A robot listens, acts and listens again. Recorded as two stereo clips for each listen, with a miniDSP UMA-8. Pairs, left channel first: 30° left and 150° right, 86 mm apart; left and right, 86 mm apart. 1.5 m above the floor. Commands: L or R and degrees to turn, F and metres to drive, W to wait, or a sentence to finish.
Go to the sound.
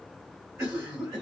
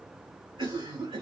R90
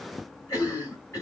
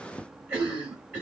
R25
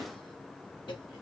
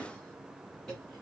F1.0
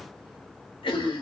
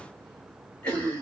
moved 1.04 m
L15
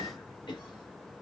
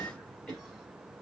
F1.0
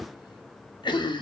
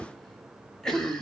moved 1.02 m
F1.0
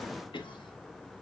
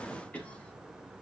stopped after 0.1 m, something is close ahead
L15
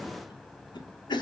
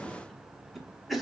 I am next to the cough.